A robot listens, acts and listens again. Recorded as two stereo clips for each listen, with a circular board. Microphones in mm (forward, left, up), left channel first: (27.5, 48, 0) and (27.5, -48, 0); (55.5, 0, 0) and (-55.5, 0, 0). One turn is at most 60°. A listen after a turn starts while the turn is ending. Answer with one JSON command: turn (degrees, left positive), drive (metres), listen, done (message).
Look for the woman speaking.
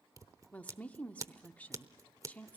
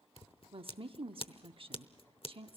{"turn": 60}
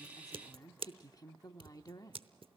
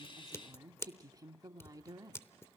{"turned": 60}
{"turn": 60}
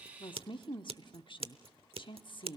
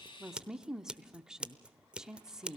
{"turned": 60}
{"turn": 60}
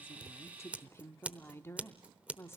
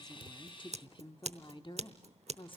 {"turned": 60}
{"turn": 30}
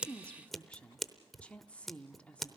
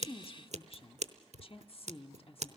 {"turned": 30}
{"turn": 15}
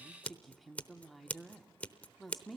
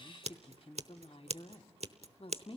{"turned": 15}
{"done": "Facing the woman speaking."}